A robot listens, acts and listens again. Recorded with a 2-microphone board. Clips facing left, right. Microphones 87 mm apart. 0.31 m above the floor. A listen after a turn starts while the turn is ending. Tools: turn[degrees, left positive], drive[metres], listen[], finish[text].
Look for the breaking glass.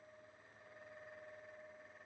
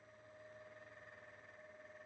Action: listen[]
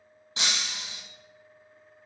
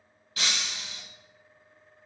Thought: The breaking glass: about 25° left or 155° left.
Action: turn[25]
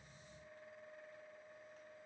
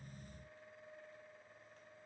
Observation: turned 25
Action: listen[]
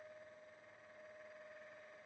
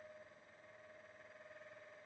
Action: finish[I heard breaking glass, but can't make it out now. It was about straight ahead or 130° left.]